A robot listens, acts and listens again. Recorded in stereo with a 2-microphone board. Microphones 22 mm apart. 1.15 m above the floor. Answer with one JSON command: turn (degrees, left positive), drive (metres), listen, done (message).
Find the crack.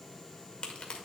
{"turn": 55}
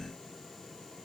{"listen": true}
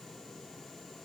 {"done": "I heard a crack, but can't make it out now. It was about straight ahead or 70° left."}